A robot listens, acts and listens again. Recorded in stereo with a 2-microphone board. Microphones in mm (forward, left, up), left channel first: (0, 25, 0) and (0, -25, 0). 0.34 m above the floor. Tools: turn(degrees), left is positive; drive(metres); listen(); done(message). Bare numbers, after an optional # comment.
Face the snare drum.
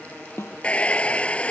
# The snare drum: about 60° left or 120° left.
turn(60)
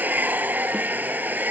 listen()
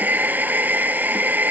listen()
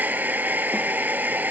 done("I heard a snare drum, but can't make it out now. It was about straight ahead or 60° left.")